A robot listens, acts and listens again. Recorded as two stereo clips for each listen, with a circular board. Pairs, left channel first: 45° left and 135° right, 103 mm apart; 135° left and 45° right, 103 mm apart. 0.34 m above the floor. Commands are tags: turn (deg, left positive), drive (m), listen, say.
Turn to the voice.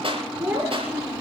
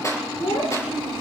<turn deg="150"/>
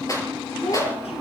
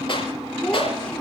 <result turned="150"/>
<turn deg="55"/>
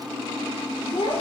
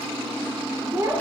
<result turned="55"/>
<turn deg="15"/>
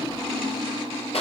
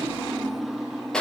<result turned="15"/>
<listen/>
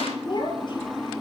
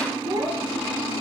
<say>Found it: a child speaking, straight ahead.</say>